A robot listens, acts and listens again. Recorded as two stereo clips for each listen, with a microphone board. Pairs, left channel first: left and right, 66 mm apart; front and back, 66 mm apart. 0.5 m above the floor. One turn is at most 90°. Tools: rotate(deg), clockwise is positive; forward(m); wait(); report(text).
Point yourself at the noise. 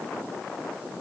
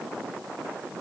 wait()
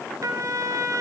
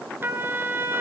rotate(90)
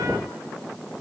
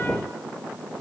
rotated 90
rotate(35)
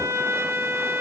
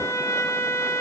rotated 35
rotate(40)
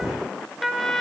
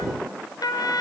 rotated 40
report("Found it: a trumpet, straight ahead.")